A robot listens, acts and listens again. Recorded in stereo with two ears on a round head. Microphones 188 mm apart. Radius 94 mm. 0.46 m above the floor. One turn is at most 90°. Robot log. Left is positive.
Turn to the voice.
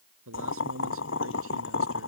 cmd yaw -90
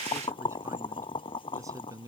note: So it is at 15° right.
cmd yaw -15
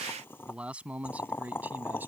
note: The man speaking is now 10° right.
cmd yaw -10
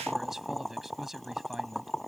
end: Found it: a man speaking, straight ahead.